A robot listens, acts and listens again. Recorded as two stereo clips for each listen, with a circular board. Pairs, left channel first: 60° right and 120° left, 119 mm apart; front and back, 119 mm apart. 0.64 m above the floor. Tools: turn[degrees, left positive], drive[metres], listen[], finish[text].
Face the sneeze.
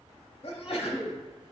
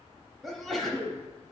Thought: The sneeze: 90° right.
Action: turn[-90]
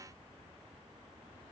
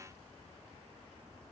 Action: finish[Facing where the sneeze came from. I can't hear it now.]